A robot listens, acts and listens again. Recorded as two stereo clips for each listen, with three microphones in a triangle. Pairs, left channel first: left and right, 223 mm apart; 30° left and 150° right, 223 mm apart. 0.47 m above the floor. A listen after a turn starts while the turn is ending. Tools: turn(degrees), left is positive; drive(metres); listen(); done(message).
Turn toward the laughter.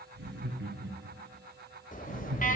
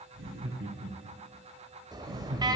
turn(degrees=-125)
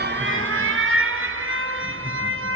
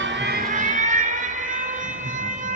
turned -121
listen()
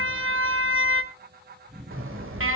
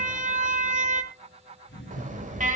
done("Found it: laughter, straight ahead, over 4 m away.")